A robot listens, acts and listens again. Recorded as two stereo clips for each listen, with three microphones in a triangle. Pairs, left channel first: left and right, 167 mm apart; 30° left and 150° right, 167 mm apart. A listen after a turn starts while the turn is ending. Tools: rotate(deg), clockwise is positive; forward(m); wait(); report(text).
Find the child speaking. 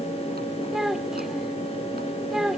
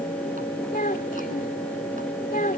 report("Facing the child speaking.")